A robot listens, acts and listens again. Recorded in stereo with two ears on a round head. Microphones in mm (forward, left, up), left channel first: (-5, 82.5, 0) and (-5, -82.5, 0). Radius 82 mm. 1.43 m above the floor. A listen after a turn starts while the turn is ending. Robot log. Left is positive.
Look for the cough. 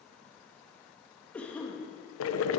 cmd yaw +30
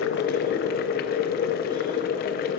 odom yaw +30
cmd idle
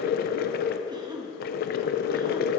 note: So it is at 25° right.
cmd yaw -25
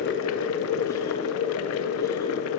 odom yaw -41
note: Nothing new. It was at 15° left.
cmd yaw +15
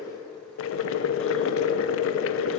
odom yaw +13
cmd idle
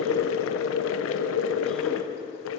end: I heard a cough from this way, but can't make it out now.